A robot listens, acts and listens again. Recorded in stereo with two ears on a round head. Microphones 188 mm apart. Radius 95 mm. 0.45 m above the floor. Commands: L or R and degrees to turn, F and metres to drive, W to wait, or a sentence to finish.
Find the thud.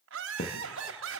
L40
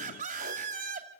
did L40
W
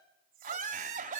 I heard a thud, but can't make it out now. It was about straight ahead or 100° left.